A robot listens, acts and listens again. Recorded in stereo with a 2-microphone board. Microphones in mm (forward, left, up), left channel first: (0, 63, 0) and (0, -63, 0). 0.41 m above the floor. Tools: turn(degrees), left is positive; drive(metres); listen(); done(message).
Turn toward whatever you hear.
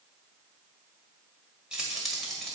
turn(degrees=30)
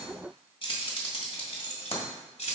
turn(degrees=115)
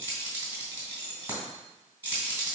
turn(degrees=-20)
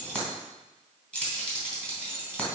turn(degrees=10)
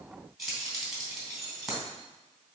done("Found it: keys jangling, straight ahead.")